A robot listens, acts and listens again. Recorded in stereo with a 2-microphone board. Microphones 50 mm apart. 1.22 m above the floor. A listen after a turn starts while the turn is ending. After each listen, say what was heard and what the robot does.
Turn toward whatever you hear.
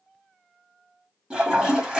The toilet flushing: about 20° right or 160° right. Turn 20° right.
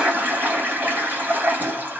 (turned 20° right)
So it is at 140° right. Turn 140° right.
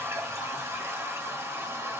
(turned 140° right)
The toilet flushing is now 70° right. Turn 70° right.
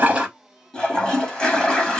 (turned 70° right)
The toilet flushing is now 20° left. Turn 20° left.
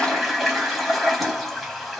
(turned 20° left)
Found it: a toilet flushing, straight ahead, 1 to 2 m away.